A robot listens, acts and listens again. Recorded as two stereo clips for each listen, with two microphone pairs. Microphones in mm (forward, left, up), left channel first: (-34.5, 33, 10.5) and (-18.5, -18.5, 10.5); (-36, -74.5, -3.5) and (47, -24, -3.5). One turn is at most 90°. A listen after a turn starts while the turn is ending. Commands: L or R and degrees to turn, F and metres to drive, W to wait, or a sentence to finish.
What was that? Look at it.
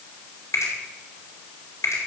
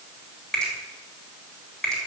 L90
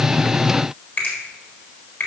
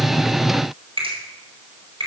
L55
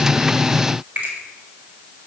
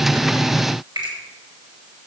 R10
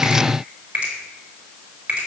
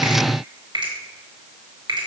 Found it: a finger snap, straight ahead, over 4 m away.